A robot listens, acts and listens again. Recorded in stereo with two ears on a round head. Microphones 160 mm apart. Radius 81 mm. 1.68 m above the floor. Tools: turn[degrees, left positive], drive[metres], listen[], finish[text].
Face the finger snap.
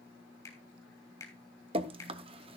Thought: The finger snap: about 15° left or 165° left.
Action: turn[15]
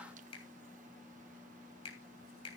Thought: So it is at 150° left.
Action: turn[150]
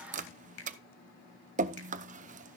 Thought: The finger snap is now 65° left.
Action: turn[65]
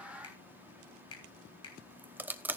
Thought: The finger snap is now 30° left.
Action: turn[30]
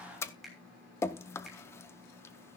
Action: finish[Found it: a finger snap, straight ahead, 2 to 4 m away.]